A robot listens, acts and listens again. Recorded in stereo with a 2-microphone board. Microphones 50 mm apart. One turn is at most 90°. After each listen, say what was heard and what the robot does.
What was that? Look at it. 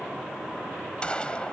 The gunshot: about 20° left or 160° left. Turn 20° left.
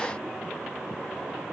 Keep listening.
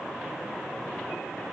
I heard a gunshot, but can't make it out now. It was about straight ahead or 140° left.